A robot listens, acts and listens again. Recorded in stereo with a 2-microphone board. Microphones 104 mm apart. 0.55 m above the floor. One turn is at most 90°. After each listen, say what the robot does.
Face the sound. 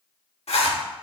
Turn 90° left.
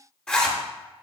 Turn 10° left.
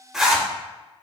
Facing the zipper.